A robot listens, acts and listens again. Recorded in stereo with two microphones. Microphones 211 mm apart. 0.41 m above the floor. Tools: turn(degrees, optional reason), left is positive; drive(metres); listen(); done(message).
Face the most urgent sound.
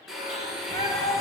turn(degrees=25, reason="The shout: about 25° left or 155° left.")
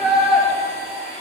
done("Facing the shout.")